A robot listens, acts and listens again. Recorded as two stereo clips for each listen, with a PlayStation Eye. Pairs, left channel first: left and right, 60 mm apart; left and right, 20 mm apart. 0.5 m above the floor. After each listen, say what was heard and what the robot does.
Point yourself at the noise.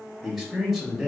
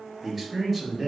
Turn 30° left.
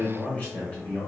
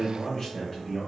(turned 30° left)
So it is at 150° left. Turn 150° left.
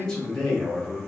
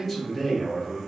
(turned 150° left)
The man speaking is now 10° left. Turn 10° left.
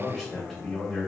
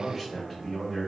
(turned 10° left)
Found it: a man speaking, straight ahead, 1 to 2 m away.